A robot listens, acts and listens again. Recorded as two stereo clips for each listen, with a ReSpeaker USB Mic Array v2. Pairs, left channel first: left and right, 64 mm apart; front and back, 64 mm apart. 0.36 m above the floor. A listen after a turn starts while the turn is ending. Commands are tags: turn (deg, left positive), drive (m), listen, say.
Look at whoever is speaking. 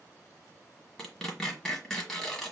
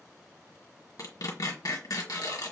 <listen/>
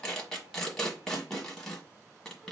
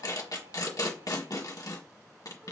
<listen/>
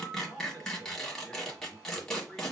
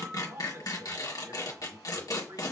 <turn deg="170"/>
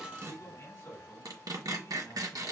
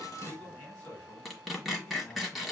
<turn deg="65"/>
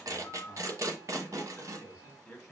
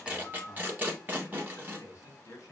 <turn deg="40"/>
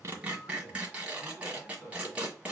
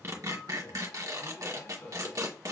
<say>Found it: a man speaking, straight ahead.</say>